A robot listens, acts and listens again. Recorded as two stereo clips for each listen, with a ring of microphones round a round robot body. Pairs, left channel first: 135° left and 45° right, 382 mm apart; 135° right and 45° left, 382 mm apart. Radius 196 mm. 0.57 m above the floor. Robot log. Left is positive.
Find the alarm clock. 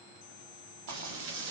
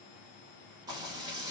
cmd idle
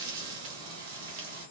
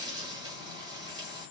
cmd idle
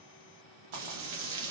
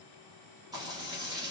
end: I can't make out an alarm clock, only frying.